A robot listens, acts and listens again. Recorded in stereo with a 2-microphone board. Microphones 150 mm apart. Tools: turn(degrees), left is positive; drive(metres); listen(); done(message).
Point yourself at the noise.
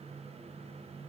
listen()
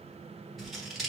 turn(degrees=30)
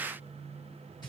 turn(degrees=150)
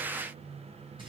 turn(degrees=-35)
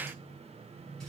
listen()
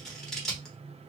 done("Facing the scissors, under 1 m away.")